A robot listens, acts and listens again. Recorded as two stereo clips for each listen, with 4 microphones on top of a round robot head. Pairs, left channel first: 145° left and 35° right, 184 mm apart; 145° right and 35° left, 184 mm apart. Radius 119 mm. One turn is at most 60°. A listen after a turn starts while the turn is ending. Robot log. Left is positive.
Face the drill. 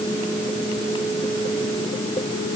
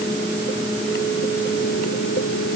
cmd idle
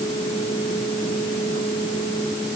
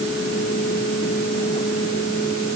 cmd idle
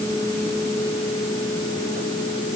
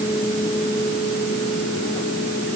end: I can't make out a drill.